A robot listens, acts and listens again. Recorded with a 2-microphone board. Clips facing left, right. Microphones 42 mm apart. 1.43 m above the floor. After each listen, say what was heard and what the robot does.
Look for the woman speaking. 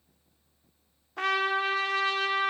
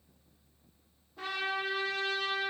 Keep listening.
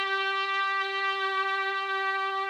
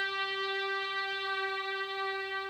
Keep listening.
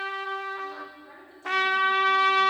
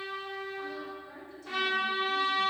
The woman speaking: about 30° left or 150° left. Turn 30° left.
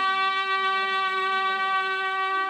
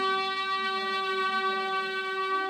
Keep listening.
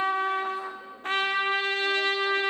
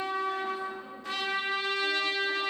Keep listening.
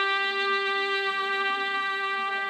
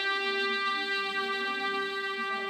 I heard a woman speaking, but can't make it out now. It was about straight ahead or 120° left.